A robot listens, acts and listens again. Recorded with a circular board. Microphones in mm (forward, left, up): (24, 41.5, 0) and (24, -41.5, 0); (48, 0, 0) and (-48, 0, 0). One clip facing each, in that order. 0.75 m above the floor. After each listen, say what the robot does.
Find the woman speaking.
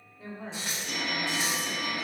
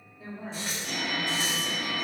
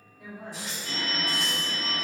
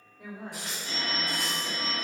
Turn 120° left.
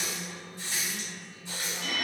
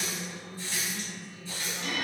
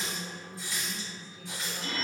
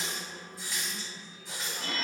Turn 40° left.
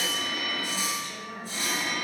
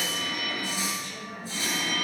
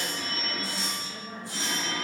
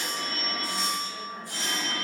Turn 15° left.
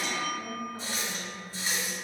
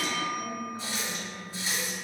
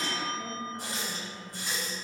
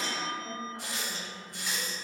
Found it: a woman speaking, straight ahead.